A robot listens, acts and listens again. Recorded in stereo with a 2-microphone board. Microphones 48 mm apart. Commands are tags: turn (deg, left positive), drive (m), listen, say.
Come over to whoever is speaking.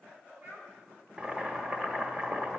<turn deg="-65"/>
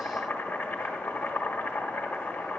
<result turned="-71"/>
<listen/>
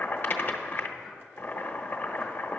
<listen/>
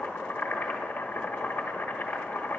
<say>I heard a child speaking, but can't make it out now. It was about 5° left or 45° right. I did not reach it.</say>